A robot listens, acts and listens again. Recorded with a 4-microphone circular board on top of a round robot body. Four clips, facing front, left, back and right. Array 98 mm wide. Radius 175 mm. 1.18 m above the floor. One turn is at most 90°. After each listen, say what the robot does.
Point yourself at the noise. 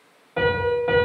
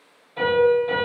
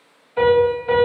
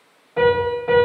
Turn 30° right.
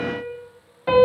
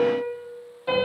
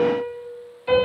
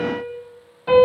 Found it: a piano, straight ahead, 2 to 4 m away.